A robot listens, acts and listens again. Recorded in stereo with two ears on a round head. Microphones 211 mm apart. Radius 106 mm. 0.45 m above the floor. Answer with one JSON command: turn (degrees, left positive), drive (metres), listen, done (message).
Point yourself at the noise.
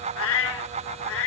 {"turn": 60}
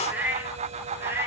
{"turn": -10}
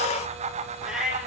{"done": "Facing the cat meowing."}